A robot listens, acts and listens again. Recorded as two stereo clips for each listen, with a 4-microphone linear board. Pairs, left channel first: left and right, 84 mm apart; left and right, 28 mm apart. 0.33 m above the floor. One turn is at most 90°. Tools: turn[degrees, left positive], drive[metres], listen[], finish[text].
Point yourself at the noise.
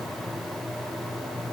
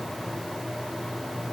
Action: listen[]
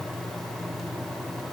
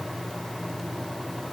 Action: listen[]
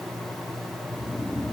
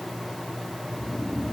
Thought: The snoring: about 25° left or 155° left.
Action: turn[25]
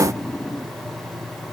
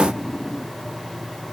Thought: So it is at 130° left.
Action: turn[90]
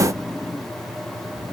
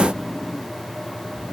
Thought: The snoring is now 20° left.
Action: turn[20]
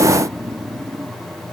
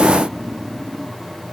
Action: finish[Found it: snoring, straight ahead.]